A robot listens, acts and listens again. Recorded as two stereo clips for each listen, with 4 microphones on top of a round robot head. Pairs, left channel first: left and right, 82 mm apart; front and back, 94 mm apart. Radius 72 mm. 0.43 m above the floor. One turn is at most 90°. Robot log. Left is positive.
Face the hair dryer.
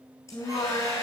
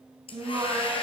note: The hair dryer: 25° left.
cmd yaw +25
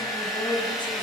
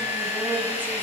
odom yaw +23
end: Found it: a hair dryer, straight ahead.